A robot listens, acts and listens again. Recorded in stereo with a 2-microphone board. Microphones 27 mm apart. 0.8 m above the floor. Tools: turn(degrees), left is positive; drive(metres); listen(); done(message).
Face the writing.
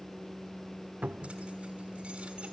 listen()
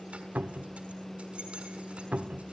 listen()
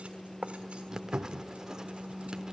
turn(degrees=-25)
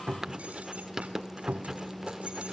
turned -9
turn(degrees=-15)
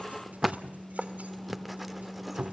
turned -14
done("Facing the writing.")